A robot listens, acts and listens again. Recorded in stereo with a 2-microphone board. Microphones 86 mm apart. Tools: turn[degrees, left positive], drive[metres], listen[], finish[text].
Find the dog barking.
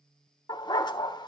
Thought: The dog barking: about 55° left or 125° left.
Action: turn[55]
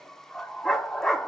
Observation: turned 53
Action: finish[Found it: a dog barking, straight ahead.]